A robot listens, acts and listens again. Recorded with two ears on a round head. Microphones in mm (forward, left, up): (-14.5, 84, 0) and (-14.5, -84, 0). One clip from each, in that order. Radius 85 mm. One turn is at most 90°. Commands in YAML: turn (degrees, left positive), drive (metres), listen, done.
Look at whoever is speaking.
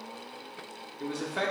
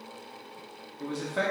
turn: 30
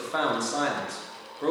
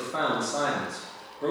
turn: 90
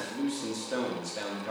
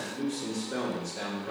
turn: 35
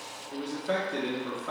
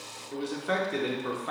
turn: -15
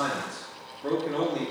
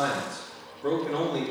done: "Found it: a man speaking, straight ahead."